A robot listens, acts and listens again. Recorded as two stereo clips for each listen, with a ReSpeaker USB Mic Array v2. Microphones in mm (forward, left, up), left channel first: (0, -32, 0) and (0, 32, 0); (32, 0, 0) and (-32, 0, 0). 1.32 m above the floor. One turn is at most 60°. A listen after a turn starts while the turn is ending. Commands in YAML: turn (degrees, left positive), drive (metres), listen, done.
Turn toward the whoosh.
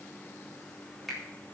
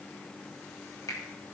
listen: true
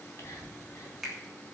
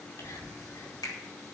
listen: true
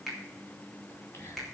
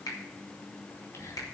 done: "I can't make out a whoosh, only a finger snap and whispering."